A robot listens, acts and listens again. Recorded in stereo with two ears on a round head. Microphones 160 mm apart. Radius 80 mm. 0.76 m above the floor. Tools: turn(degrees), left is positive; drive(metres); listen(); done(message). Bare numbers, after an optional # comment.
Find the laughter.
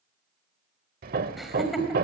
turn(30)
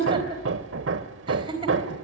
# So it is at 30° right.
turn(-30)
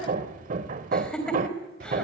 done("Facing the laughter, 2 to 4 m away.")